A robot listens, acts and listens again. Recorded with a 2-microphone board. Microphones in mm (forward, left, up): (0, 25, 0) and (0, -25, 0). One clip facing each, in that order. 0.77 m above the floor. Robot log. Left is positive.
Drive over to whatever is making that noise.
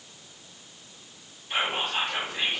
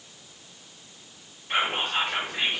note: The whispering: about 60° right or 120° right.
cmd yaw -60
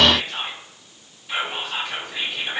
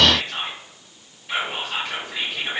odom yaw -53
note: So it is at 45° right.
cmd yaw -45
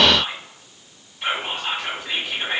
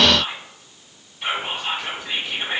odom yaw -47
cmd fwd 1.0
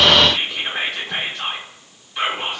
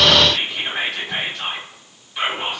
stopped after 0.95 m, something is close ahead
end: Arrived at the whispering, straight ahead.